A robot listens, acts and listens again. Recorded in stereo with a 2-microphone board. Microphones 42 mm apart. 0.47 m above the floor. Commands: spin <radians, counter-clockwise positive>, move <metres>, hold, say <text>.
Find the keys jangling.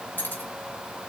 spin 1.13
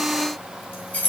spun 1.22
spin 0.79
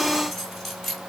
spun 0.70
say Facing the keys jangling.